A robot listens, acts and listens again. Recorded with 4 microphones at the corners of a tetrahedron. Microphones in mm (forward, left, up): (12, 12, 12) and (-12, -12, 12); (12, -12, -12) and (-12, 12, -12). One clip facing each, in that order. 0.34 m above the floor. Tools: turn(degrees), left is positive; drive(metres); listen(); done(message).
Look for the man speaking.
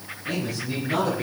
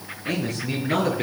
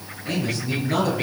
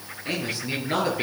turn(degrees=-160)
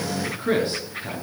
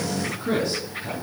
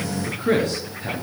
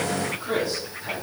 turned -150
turn(degrees=-15)
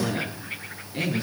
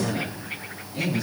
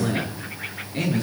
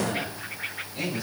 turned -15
turn(degrees=-10)
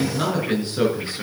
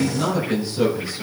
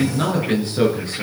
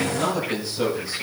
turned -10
done("Facing the man speaking, over 4 m away.")